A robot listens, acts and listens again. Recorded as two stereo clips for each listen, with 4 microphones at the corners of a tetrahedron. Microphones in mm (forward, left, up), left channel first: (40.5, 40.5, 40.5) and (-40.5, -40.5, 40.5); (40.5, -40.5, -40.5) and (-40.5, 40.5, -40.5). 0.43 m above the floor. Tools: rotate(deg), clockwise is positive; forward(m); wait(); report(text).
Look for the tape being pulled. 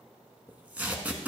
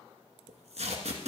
rotate(-150)
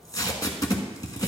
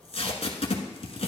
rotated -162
rotate(15)
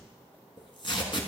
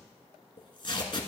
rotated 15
report("Facing the tape being pulled.")